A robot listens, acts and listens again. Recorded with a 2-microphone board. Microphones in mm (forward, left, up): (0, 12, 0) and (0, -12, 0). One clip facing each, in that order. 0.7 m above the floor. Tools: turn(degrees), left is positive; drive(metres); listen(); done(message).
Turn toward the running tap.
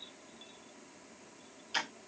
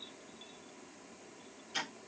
listen()
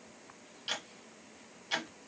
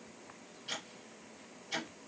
listen()
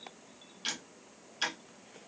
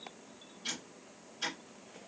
done("I can't make out a running tap to turn to.")